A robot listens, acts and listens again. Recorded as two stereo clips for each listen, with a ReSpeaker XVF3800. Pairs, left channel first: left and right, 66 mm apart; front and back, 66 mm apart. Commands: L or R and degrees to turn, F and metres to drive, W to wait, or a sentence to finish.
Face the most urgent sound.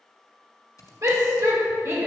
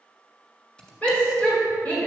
R60
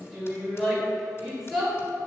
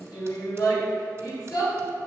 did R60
Facing the shout, 1 to 2 m away.